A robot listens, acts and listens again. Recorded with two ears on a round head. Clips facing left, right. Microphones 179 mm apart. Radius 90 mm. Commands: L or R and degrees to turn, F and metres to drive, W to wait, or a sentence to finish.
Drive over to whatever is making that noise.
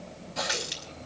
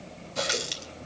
R35
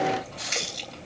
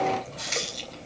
F1.0
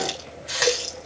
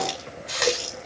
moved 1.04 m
F1.0
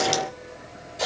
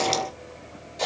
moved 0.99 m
F1.0
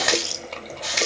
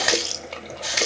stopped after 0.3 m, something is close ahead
Arrived at the running tap, straight ahead.